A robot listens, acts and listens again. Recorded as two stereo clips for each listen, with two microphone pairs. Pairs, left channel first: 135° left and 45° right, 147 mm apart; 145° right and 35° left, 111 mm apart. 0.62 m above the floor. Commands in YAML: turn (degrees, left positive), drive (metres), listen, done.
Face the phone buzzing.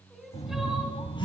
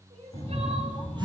turn: 80
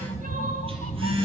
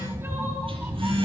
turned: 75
done: "Found it: a phone buzzing, straight ahead, over 4 m away."